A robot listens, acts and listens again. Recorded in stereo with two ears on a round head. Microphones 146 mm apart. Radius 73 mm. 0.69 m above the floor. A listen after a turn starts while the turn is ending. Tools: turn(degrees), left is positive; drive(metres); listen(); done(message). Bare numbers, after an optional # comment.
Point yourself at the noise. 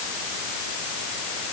listen()
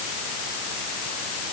listen()
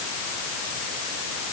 done("I can't make out anything.")